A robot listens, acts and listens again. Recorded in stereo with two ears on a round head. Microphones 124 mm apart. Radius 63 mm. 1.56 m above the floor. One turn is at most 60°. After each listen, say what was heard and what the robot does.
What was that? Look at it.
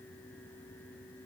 Keep listening.
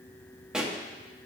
Turn 30° right.
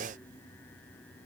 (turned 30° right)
Keep listening.
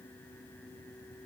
I heard a pop, but can't make it out now. It was about 25° left or 145° right.